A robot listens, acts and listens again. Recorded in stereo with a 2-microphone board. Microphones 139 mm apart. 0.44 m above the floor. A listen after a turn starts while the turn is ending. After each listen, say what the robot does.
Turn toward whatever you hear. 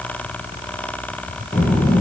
Turn 90° left.
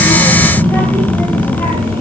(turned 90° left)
Turn 15° left.
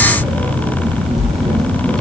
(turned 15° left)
Facing the child speaking.